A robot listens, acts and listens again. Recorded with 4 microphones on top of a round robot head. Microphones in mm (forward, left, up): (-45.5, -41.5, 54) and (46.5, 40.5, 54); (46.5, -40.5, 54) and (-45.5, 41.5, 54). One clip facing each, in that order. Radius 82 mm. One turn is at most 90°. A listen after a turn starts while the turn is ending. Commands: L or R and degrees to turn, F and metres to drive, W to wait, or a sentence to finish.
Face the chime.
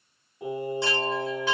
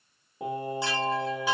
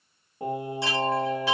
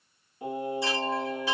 R40
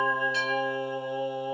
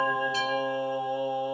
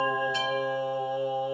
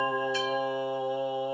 W
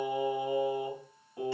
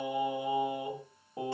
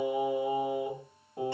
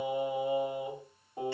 W
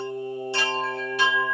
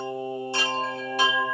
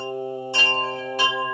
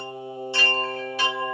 Facing the chime, 1 to 2 m away.